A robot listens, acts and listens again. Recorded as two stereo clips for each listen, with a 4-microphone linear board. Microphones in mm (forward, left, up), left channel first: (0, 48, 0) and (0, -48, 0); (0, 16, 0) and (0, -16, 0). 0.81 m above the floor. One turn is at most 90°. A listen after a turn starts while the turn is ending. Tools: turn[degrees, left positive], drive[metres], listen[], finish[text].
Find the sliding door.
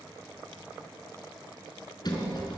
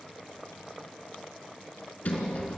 Thought: The sliding door: about 50° left or 130° left.
Action: turn[50]
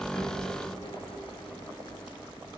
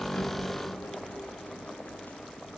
Thought: So it is at 80° left.
Action: turn[80]
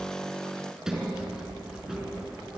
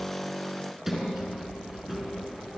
Action: finish[Facing the sliding door, over 4 m away.]